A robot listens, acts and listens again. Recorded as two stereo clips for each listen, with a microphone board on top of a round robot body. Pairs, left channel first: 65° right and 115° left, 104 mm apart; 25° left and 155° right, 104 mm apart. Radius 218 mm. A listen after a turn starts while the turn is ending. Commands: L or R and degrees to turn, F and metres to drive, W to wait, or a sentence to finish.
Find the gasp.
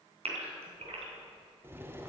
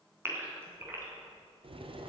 L135
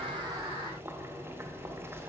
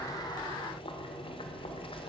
I heard a gasp from this way, but can't make it out now.